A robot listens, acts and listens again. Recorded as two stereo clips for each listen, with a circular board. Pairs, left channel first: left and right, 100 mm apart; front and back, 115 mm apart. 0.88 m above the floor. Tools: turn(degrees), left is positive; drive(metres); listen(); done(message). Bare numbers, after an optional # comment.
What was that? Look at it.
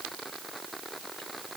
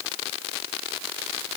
listen()
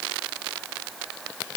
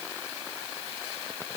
listen()
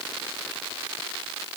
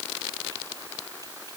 done("I can't make out anything.")